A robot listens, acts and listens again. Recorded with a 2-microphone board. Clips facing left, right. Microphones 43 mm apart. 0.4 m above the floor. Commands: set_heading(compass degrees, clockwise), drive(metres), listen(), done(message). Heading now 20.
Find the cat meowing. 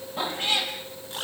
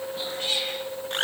set_heading(350)
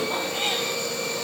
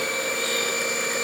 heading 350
listen()
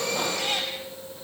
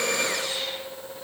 listen()
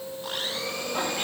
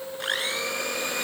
done("I heard a cat meowing, but can't make it out now. It was about straight ahead or 120° left.")